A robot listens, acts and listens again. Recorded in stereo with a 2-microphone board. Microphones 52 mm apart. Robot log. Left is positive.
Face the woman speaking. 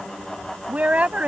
note: The woman speaking: about 25° right or 155° right.
cmd yaw -25
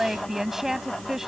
end: Facing the woman speaking.